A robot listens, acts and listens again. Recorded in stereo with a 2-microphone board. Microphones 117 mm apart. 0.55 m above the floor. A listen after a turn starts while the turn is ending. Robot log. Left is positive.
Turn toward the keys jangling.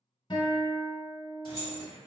note: The keys jangling: about 40° left or 140° left.
cmd yaw +40
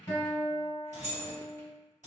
note: So it is at 100° left.
cmd yaw +100
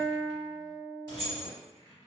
note: The keys jangling is now 35° left.
cmd yaw +35
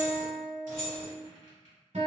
note: The keys jangling is now 30° left.
cmd yaw +30
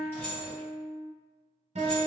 cmd idle
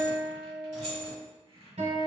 end: Found it: keys jangling, straight ahead.